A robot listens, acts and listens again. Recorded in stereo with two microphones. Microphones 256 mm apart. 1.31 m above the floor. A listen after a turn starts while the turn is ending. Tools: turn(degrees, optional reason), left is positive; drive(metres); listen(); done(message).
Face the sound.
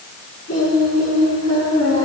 turn(degrees=90)
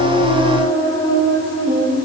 turn(degrees=15, reason="So it is at 15° left.")
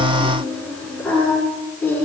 turn(degrees=10, reason="The singing is now 10° left.")
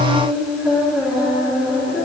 done("Found it: singing, straight ahead.")